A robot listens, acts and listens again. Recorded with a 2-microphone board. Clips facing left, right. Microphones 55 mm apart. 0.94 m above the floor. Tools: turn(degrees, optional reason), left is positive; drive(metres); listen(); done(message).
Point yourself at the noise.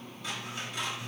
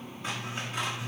turn(degrees=-30, reason="The scissors: about 30° right or 150° right.")
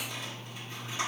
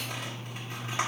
turn(degrees=-120, reason="So it is at 120° right.")
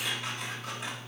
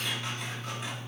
done("Found it: scissors, straight ahead, 1 to 2 m away.")